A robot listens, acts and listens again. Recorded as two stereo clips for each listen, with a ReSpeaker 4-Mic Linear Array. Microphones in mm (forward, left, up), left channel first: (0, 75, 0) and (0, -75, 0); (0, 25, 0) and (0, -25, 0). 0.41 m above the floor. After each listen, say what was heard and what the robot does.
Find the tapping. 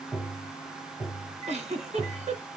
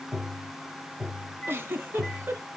Turn 30° right.
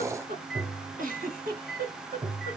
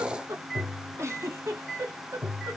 So it is at 145° right. Turn 145° right.
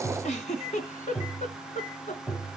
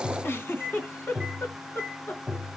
The tapping is now 10° left. Turn 10° left.
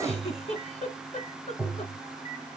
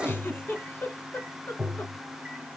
Facing the tapping.